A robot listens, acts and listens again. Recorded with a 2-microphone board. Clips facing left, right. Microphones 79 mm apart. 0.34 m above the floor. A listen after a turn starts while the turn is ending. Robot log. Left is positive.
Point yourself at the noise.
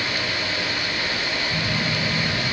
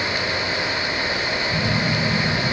note: The phone buzzing: about 20° right or 160° right.
cmd yaw -20
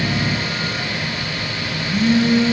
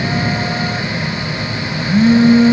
note: So it is at 135° right.
cmd yaw -135
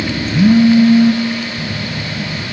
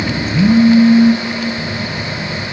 note: The phone buzzing is now 20° left.
cmd yaw +20
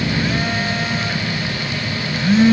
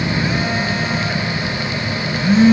end: Facing the phone buzzing.